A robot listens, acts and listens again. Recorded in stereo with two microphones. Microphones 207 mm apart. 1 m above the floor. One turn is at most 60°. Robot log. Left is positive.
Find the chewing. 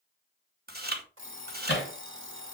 note: The chewing: about 50° right or 130° right.
cmd yaw -50
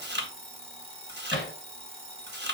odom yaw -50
note: So it is at 70° right.
cmd yaw -60
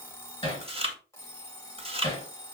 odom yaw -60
note: The chewing is now 30° right.
cmd yaw -30
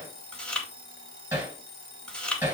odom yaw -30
end: Facing the chewing, 1 to 2 m away.